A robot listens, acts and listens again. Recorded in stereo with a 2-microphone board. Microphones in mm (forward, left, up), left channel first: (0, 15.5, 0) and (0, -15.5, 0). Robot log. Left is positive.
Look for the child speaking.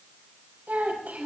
note: The child speaking: about 70° right or 110° right.
cmd yaw -70
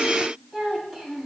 end: Found it: a child speaking, straight ahead.